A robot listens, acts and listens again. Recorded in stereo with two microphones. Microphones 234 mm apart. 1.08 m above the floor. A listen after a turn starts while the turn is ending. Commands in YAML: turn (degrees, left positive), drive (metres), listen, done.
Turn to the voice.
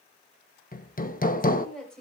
turn: 30
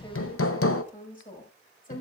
turn: 145
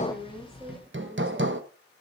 listen: true
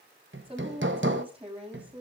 turn: -25
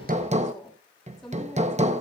done: "Found it: a woman speaking, straight ahead, over 4 m away."